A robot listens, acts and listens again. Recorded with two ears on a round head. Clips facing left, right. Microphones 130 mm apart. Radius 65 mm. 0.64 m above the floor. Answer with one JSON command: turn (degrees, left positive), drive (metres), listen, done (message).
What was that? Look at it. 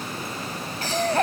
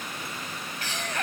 {"turn": 30}
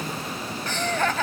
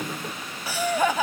{"turn": -10}
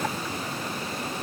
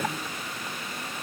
{"listen": true}
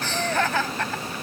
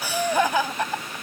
{"turn": -15}
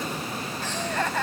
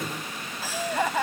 {"turn": -10}
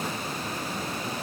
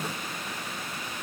{"listen": true}
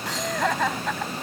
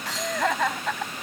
{"done": "Facing the laughter."}